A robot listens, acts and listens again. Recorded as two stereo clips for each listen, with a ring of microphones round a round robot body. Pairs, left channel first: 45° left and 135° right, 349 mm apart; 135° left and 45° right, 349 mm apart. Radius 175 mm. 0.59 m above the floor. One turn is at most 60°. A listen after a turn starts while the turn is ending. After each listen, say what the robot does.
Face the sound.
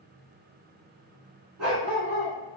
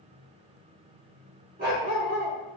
Turn 60° right.
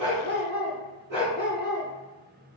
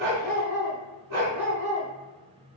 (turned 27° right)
Turn 60° right.
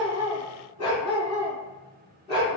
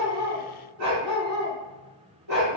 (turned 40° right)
Turn 30° right.
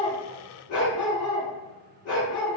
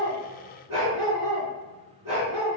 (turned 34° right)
Facing the dog barking, 2 to 4 m away.